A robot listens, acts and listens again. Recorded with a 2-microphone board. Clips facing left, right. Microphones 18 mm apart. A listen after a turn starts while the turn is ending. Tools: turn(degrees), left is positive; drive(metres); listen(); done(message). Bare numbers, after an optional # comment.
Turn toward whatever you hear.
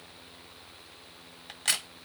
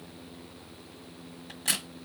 # The crack: about 35° left or 145° left.
turn(35)
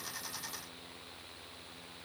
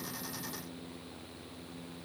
listen()
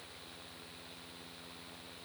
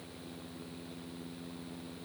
done("I heard a crack, but can't make it out now. It was about straight ahead or 110° left.")